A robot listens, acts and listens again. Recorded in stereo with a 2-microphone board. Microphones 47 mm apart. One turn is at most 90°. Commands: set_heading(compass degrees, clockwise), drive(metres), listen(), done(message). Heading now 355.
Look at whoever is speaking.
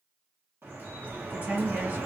set_heading(35)
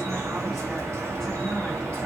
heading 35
listen()
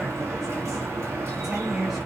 done("Facing the woman speaking, 1 to 2 m away.")